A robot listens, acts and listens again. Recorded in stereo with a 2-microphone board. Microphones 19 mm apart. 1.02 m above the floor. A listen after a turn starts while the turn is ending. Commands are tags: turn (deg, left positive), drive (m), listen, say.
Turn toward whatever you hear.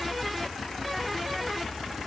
<listen/>
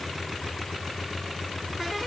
<listen/>
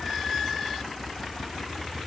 <say>I can't make out anything.</say>